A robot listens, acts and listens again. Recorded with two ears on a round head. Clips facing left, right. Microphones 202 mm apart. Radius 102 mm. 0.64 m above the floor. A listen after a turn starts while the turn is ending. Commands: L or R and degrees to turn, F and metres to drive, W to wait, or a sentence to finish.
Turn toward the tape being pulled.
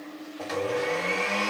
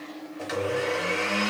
W
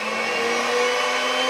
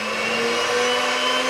W
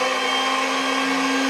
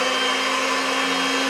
I can't make out tape being pulled, only a blender.